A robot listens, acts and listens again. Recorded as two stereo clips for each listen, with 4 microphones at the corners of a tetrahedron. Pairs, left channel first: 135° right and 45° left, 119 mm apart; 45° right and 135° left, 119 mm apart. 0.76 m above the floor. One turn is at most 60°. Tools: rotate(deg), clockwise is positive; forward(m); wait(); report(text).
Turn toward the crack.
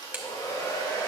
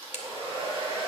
rotate(35)
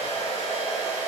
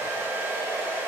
report("I heard a crack from this way, but can't make it out now.")